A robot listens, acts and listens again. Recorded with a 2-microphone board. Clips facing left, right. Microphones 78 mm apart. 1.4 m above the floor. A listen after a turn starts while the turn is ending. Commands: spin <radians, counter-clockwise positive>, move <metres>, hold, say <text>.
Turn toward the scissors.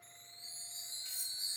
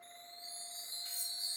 hold
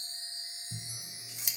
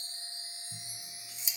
spin 1.13
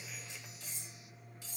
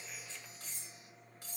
hold
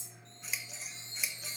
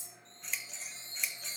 say Found it: scissors, straight ahead.